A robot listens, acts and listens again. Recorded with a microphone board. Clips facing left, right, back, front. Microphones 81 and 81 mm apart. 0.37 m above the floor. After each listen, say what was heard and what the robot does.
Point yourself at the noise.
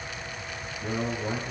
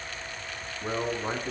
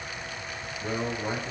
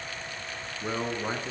The man speaking: 60° right. Turn 60° right.
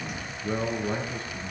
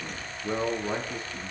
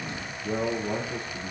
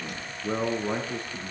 The man speaking is now 10° right. Turn 10° right.
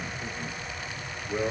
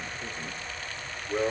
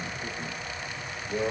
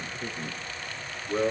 The man speaking is now 10° right. Turn 10° right.
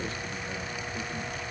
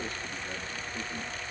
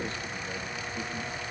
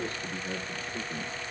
Keep listening.
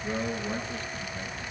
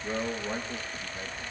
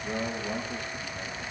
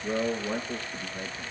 Facing the man speaking, over 4 m away.